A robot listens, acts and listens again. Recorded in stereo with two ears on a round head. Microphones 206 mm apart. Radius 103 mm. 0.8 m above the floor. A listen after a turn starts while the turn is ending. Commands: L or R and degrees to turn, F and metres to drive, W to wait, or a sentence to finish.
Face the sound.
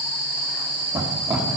R30
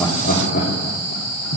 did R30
L55
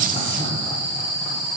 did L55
W
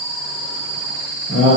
L40
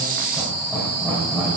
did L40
Found it: laughter, straight ahead, 2 to 4 m away.